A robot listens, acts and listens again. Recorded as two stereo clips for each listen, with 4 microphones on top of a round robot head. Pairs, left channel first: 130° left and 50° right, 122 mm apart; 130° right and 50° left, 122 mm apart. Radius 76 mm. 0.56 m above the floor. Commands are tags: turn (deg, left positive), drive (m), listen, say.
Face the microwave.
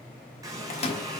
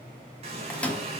<turn deg="150"/>
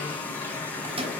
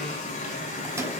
<turn deg="-15"/>
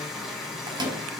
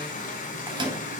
<say>Facing the microwave, 1 to 2 m away.</say>